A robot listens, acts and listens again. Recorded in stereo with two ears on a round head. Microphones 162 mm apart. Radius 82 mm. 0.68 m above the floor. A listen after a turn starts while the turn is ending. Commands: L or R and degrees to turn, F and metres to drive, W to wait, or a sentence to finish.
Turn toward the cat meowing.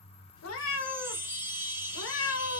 L90
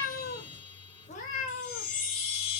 L45
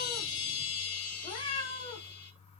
L25
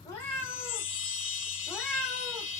Facing the cat meowing, 1 to 2 m away.